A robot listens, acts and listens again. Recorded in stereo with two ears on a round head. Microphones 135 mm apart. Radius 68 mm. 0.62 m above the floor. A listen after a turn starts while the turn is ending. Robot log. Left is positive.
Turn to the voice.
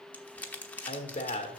note: The man speaking: about 45° left or 135° left.
cmd yaw +45
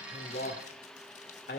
note: So it is at 80° left.
cmd yaw +80
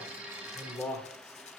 note: The man speaking is now 15° left.
cmd yaw +15
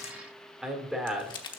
end: Found it: a man speaking, straight ahead, 1 to 2 m away.